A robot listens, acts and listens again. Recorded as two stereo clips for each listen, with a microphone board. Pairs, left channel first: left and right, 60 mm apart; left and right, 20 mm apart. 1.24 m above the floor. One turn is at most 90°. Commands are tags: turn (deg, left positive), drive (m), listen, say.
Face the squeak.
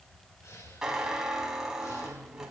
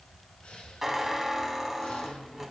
<turn deg="-30"/>
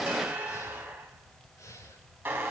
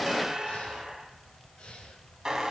<turn deg="-90"/>
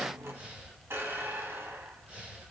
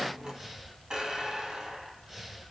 <turn deg="-45"/>
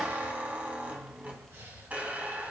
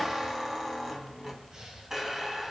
<turn deg="-25"/>
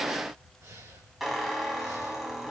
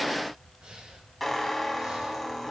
<say>Found it: a squeak, straight ahead, 2 to 4 m away.</say>